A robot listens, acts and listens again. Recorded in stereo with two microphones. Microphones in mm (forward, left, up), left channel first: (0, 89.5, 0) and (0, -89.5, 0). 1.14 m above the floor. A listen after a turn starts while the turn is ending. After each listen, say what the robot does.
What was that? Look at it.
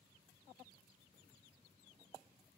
Keep listening.
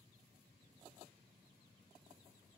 Keep listening.
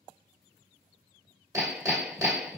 Turn 20° right.
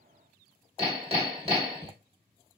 Turn 135° right.
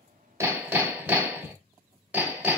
Turn 10° right.
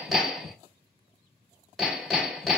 Facing the hammering, 1 to 2 m away.